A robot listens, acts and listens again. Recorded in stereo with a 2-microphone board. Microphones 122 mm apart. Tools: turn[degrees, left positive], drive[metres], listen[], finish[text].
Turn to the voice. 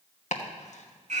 Action: listen[]
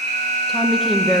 Action: turn[30]
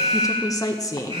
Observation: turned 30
Thought: So it is at 150° left.
Action: turn[150]
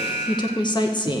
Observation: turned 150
Thought: The woman speaking is now 40° left.
Action: turn[40]
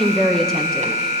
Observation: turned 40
Action: finish[Facing the woman speaking, under 1 m away.]